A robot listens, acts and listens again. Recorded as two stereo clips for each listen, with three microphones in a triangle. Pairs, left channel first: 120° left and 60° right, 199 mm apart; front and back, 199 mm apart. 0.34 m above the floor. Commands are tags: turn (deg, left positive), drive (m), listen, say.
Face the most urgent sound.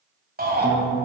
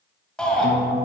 <turn deg="-85"/>
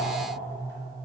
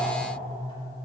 <listen/>
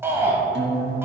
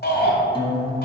<turn deg="15"/>
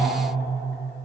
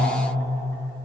<listen/>
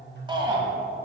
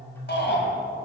<say>Found it: a shout, straight ahead, 1 to 2 m away.</say>